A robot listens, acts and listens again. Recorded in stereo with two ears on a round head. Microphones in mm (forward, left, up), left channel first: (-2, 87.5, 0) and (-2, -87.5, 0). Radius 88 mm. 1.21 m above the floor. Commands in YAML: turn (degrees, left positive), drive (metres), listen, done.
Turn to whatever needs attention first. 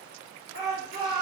turn: 55
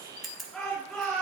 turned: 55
done: "Found it: a shout, straight ahead, 2 to 4 m away."